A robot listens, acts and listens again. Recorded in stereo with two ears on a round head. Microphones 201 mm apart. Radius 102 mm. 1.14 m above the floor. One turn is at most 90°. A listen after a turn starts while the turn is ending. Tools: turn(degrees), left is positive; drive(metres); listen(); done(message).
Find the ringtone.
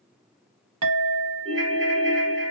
turn(degrees=-30)
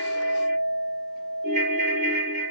turn(degrees=-90)
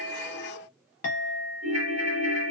turn(degrees=-70)
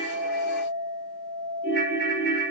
done("Facing the ringtone, 1 to 2 m away.")